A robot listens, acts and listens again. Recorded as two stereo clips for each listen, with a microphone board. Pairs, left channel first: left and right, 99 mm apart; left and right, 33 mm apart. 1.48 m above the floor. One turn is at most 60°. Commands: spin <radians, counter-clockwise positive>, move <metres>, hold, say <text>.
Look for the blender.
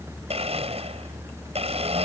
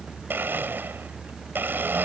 spin -1.05
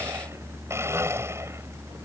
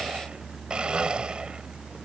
spin -0.44
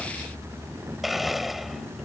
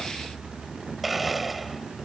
say Found it: a blender, straight ahead.